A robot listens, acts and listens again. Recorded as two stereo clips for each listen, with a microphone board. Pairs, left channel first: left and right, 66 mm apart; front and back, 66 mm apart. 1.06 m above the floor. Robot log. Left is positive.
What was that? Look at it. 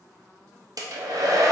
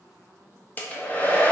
note: The hair dryer: 65° right.
cmd yaw -65
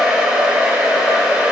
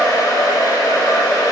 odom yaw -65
note: The hair dryer is now 15° right.
cmd yaw -15
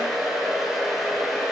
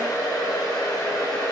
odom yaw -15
end: Facing the hair dryer, under 1 m away.